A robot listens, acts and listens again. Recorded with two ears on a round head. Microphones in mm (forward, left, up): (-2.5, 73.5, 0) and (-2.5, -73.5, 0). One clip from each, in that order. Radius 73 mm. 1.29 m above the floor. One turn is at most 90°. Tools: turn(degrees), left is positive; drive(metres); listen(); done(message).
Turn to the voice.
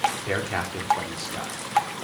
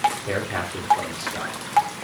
turn(degrees=25)
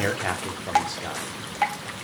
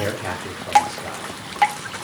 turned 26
turn(degrees=90)
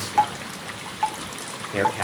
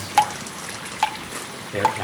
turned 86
turn(degrees=45)
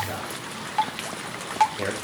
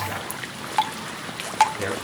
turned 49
done("Found it: a man speaking, straight ahead, 2 to 4 m away.")